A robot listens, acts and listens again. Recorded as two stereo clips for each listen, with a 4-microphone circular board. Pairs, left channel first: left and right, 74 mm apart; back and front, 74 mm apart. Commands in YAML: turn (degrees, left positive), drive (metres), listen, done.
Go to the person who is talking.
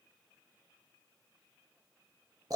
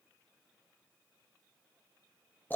listen: true
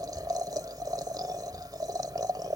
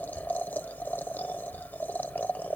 listen: true
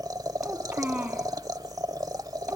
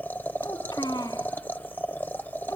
turn: -160
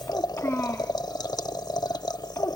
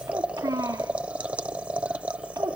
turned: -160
turn: 30
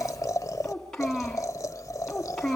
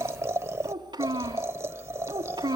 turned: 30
drive: 1.0
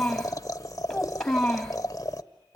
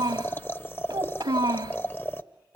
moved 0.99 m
drive: 1.0
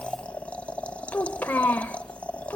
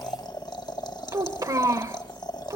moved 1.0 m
turn: 25
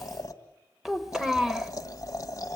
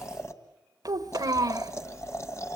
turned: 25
drive: 1.0
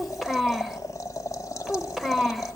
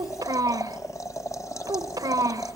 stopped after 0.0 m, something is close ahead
done: "Arrived at the child speaking, straight ahead."